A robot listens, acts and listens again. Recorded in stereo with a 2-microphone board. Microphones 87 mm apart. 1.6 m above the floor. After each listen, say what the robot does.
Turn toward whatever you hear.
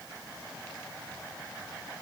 Keep listening.
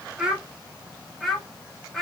Turn 30° left.
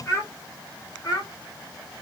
Turn 135° left.
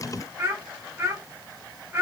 Turn 25° right.
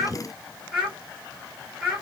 Found it: a child speaking, straight ahead, 1 to 2 m away.